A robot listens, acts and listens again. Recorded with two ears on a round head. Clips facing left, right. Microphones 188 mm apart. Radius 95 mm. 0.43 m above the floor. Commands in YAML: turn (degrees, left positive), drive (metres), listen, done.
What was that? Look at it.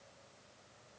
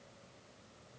listen: true
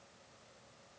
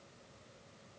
listen: true
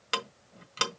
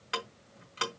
turn: 50
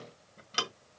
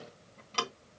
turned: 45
turn: 10
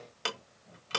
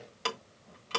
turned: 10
done: "Facing the ticking, 1 to 2 m away."